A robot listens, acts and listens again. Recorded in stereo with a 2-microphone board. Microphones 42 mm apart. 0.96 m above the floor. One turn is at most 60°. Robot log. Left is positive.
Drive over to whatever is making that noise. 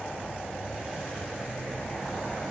cmd idle
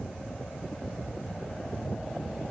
cmd idle
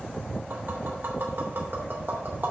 note: The tapping: about 55° right or 125° right.
cmd yaw -55
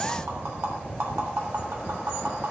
note: So it is at 70° right.
cmd yaw -60
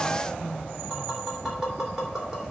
cmd fwd 1.0
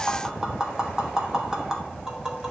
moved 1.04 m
note: The tapping is now 15° right.
cmd yaw -15
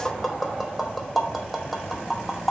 cmd fwd 1.0
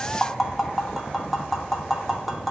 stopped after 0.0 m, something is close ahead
end: I am next to the tapping.